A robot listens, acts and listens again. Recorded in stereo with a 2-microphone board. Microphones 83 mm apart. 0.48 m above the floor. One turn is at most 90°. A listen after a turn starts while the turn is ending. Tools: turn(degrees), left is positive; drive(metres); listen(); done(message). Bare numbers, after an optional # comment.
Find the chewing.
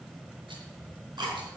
# The chewing: about 60° right or 120° right.
turn(-60)
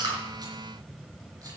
listen()
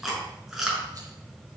done("Facing the chewing, over 4 m away.")